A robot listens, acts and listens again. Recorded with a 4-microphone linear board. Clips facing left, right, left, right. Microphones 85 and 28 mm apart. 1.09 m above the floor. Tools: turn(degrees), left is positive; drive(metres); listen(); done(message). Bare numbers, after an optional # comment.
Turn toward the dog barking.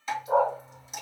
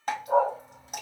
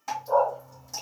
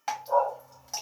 turn(30)
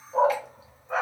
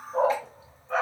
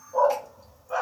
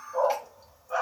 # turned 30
turn(30)
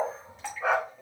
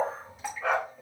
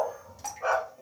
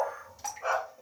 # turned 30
# So it is at 165° left.
turn(165)
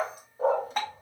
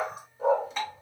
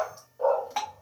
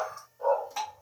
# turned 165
# The dog barking is now 50° left.
turn(50)
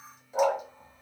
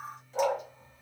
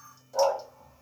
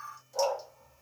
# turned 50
# The dog barking is now 35° left.
turn(35)
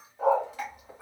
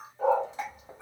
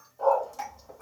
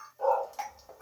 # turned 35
done("Facing the dog barking, 1 to 2 m away.")